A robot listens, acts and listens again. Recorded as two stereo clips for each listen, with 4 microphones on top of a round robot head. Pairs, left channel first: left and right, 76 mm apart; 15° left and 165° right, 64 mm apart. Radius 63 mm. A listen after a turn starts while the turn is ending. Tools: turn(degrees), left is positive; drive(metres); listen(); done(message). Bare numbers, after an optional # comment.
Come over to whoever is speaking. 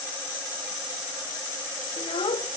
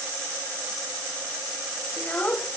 # The child speaking: 80° left.
turn(80)
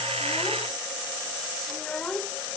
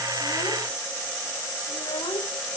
# The child speaking is now 10° left.
turn(10)
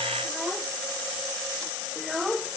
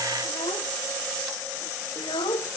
drive(1.0)
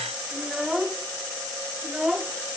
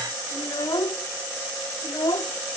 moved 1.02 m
drive(1.0)
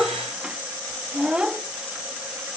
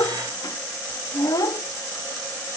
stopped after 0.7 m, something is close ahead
# The child speaking is now 10° right.
turn(-10)
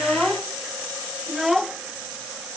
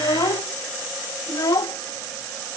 done("Arrived at the child speaking, straight ahead.")